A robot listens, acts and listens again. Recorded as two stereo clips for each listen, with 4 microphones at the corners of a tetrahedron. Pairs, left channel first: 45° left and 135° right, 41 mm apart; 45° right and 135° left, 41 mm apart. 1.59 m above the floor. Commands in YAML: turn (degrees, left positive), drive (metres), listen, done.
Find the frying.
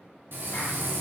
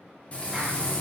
turn: -105
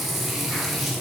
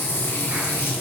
turn: -50
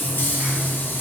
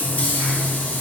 turn: 10
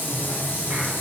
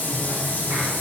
done: "Found it: frying, straight ahead, under 1 m away."